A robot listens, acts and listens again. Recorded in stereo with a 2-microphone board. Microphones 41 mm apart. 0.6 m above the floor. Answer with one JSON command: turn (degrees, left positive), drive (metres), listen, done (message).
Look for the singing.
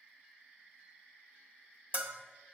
{"listen": true}
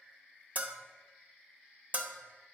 {"listen": true}
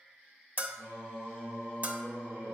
{"turn": -90}
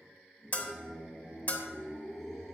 {"done": "Found it: singing, straight ahead."}